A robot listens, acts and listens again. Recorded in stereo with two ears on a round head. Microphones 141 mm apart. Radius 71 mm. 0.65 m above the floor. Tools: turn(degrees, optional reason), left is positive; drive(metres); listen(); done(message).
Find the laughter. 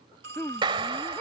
turn(degrees=30)
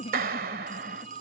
turn(degrees=140, reason="So it is at 140° left.")
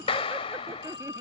listen()
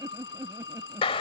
turn(degrees=-20, reason="The laughter is now 20° right.")
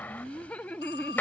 turn(degrees=10, reason="The laughter is now 10° left.")
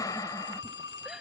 listen()
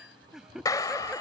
done("Facing the laughter.")